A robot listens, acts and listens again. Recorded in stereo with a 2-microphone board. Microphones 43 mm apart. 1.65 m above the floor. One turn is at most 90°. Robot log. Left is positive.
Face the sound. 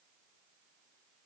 cmd idle
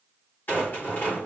note: The rattle: about 45° left or 135° left.
cmd yaw +45
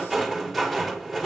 end: Facing the rattle.